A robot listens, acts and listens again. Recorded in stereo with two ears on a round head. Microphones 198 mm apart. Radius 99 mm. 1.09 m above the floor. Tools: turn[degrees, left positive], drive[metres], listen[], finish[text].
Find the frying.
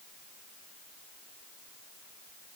Action: listen[]
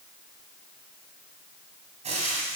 Thought: The frying: about 30° right or 150° right.
Action: turn[-30]
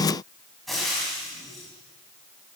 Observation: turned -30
Action: finish[Found it: frying, straight ahead.]